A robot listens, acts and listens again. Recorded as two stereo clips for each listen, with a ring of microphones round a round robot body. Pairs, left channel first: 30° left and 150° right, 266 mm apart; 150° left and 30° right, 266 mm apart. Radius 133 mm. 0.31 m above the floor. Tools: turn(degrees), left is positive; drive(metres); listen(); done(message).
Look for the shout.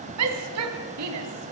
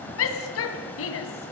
turn(degrees=-175)
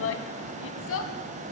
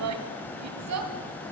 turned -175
turn(degrees=-10)
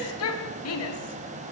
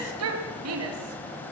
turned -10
done("Facing the shout.")